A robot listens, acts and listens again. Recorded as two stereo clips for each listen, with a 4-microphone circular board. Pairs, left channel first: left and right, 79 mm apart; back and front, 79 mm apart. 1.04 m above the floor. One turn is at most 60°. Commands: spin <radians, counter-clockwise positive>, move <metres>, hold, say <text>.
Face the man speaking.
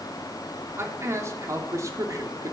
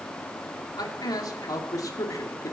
spin -1.05
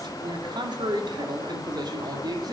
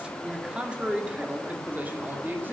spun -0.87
spin -1.05
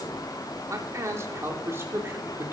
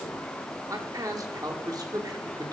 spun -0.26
spin -0.52
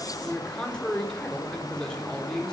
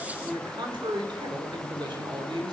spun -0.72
spin 0.17
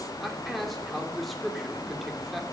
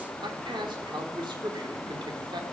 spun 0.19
say Facing the man speaking, 2 to 4 m away.